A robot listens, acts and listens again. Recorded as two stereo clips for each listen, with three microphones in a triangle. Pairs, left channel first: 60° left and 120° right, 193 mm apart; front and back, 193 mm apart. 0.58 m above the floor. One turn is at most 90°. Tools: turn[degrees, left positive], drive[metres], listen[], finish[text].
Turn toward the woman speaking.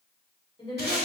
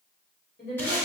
Action: finish[Found it: a woman speaking, straight ahead, 1 to 2 m away.]